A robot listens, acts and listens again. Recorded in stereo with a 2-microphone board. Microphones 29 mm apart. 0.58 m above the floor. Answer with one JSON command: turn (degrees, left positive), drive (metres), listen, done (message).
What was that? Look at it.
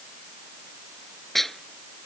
{"turn": 30}
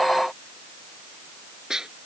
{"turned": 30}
{"turn": -20}
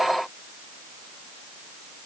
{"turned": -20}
{"listen": true}
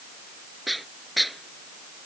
{"done": "Facing the dishes clattering."}